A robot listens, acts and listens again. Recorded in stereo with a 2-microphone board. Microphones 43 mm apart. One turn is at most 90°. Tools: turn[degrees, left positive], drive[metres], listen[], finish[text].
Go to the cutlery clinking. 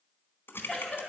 Action: listen[]
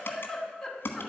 Action: listen[]
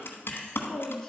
Action: finish[I can't make out cutlery clinking, only typing on a keyboard and a giggle.]